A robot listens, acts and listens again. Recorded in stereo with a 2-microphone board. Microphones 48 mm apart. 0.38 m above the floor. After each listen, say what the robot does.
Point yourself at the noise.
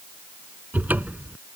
Turn 35° right.
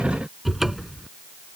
Facing the cupboard door.